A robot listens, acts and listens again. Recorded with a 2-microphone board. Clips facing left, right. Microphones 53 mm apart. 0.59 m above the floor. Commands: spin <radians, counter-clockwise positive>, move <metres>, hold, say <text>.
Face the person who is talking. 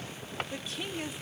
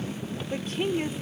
spin -0.79
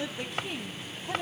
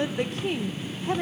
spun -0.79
spin -1.40
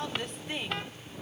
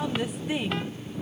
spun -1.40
spin -0.17
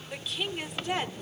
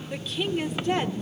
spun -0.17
say Found it: a woman speaking, straight ahead, 1 to 2 m away.